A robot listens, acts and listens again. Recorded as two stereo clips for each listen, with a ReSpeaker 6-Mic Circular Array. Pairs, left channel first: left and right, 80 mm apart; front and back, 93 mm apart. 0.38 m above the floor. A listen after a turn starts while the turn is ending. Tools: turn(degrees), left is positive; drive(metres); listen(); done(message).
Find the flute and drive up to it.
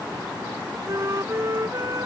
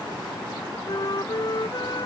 turn(degrees=-40)
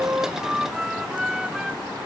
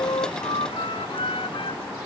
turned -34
drive(metres=1.0)
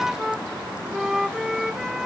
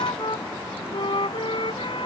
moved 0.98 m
drive(metres=1.0)
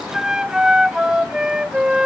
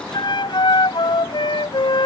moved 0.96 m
turn(degrees=-10)
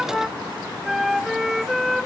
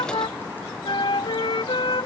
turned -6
drive(metres=1.0)
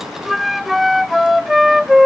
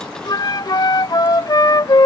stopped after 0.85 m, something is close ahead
done("Arrived at the flute, straight ahead.")